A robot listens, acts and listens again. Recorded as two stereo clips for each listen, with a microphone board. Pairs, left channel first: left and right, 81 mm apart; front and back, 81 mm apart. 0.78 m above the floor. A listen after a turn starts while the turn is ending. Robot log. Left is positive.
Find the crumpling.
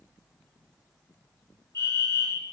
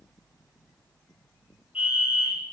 cmd idle
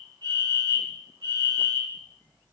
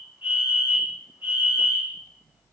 cmd idle
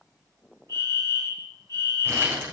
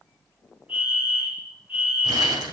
note: The crumpling: 150° right.
cmd yaw -150
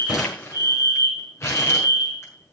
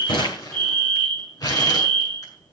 note: The crumpling is now 35° left.
cmd yaw +35
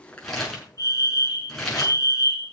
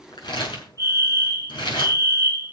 end: Found it: crumpling, straight ahead.